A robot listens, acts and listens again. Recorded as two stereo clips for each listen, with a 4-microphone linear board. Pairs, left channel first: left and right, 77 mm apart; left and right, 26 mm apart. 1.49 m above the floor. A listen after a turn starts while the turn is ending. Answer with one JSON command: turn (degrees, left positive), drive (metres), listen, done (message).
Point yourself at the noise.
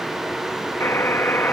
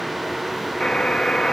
{"turn": 30}
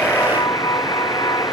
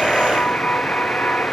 {"turn": 120}
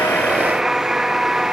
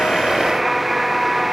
{"turn": -10}
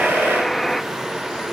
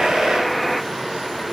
{"done": "Facing the buzzer."}